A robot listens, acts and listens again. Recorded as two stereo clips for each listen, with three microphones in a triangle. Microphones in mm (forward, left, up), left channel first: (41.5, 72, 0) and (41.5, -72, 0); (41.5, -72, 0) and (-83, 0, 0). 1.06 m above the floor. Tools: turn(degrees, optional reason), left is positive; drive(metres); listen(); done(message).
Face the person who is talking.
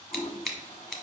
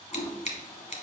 listen()
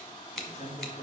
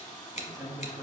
turn(degrees=85, reason="The man speaking: 85° left.")
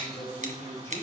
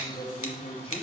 turn(degrees=20, reason="The man speaking is now 20° left.")
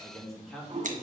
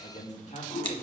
done("Found it: a man speaking, straight ahead, 2 to 4 m away.")